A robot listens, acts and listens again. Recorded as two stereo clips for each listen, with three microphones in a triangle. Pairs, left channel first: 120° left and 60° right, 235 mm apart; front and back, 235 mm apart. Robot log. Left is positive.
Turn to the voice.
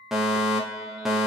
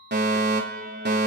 cmd idle
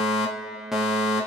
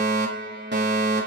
cmd idle
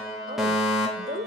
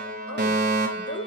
note: The woman speaking: 10° right.
cmd yaw -10
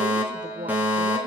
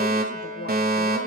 cmd idle
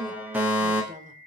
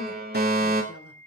cmd idle
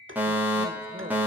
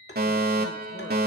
end: Facing where the woman speaking came from. I can't hear it now.